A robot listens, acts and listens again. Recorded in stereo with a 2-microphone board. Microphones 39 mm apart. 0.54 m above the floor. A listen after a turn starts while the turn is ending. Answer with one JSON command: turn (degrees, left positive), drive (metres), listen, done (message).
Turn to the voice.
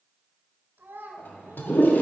{"turn": -65}
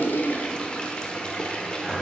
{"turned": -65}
{"listen": true}
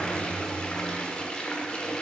{"listen": true}
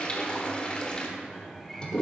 {"done": "I heard a child speaking, but can't make it out now. It was about straight ahead or 50° right."}